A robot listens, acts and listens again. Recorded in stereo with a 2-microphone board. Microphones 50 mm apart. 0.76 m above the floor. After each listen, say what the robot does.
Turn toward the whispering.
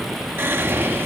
Turn 50° right.
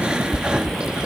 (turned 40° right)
Turn 20° right.
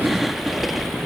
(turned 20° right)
Facing the whispering.